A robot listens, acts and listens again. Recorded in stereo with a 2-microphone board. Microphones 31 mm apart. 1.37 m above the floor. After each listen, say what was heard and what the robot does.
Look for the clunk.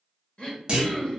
The clunk: about 40° right or 140° right. Turn 40° right.
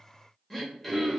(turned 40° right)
Keep listening.
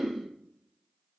I heard a clunk, but can't make it out now. It was about straight ahead or 100° right.